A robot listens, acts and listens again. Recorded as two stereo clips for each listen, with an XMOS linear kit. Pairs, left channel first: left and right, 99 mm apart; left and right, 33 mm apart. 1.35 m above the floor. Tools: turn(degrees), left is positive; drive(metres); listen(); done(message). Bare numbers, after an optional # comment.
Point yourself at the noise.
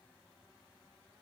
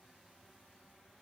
listen()
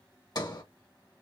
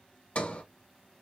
# The sliding door: about 40° left or 140° left.
turn(40)
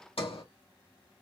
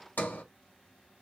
# So it is at 95° left.
turn(95)
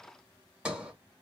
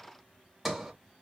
# The sliding door is now 10° right.
turn(-10)
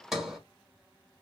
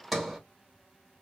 done("Facing the sliding door.")